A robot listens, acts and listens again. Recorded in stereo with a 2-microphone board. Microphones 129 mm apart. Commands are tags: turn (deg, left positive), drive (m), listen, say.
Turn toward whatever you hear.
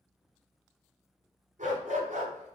<turn deg="-90"/>
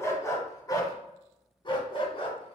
<turn deg="50"/>
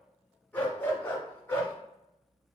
<turn deg="20"/>
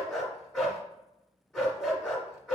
<say>Facing the dog barking.</say>